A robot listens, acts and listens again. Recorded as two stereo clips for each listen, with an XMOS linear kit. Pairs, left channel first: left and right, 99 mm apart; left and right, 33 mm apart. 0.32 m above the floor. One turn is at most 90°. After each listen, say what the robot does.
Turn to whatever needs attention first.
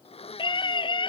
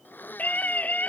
Turn 55° left.
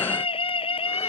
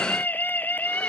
Turn 70° left.
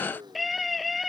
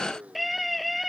Found it: a scream, straight ahead.